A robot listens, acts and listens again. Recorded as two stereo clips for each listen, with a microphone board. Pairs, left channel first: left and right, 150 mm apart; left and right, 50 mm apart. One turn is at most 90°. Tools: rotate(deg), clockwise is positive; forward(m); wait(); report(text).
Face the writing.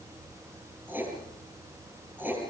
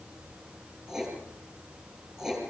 rotate(30)
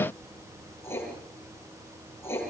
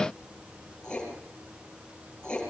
rotate(-15)
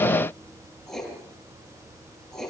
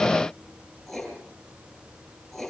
report("Found it: writing, straight ahead.")